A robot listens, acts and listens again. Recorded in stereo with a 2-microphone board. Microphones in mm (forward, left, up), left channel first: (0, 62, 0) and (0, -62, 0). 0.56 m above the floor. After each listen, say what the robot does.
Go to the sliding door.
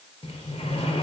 Turn 50° left.
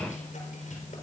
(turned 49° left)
Turn 85° left.
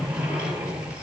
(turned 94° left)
Turn 10° right.
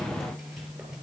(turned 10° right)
Drive 1.0 m forward.
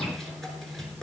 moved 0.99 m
Drive 1.0 m forward.
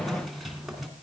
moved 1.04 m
Drive 1.0 m forward.
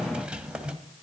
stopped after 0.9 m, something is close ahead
Turn 10° right.
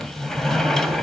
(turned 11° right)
I am next to the sliding door.